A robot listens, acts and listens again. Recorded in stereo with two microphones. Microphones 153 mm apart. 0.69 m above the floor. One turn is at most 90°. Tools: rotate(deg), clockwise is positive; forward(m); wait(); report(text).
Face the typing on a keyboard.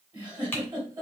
rotate(-15)
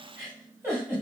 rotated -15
wait()
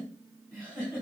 wait()
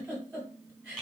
report("Facing the typing on a keyboard, 1 to 2 m away.")